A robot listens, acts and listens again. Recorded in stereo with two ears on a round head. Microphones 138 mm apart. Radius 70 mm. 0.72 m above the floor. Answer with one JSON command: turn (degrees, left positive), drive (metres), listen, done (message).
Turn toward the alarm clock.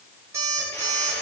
{"turn": -20}
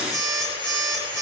{"done": "Found it: an alarm clock, straight ahead, over 4 m away."}